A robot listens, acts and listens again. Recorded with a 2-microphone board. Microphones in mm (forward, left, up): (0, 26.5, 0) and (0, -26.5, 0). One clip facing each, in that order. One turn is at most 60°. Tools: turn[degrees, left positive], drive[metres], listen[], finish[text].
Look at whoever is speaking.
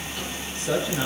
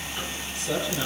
Thought: The man speaking: about 40° left or 140° left.
Action: turn[40]
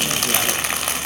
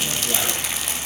Action: listen[]
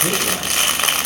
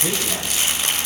Action: listen[]
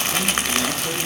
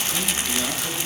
Action: finish[I heard a man speaking, but can't make it out now. It was about straight ahead or 100° left.]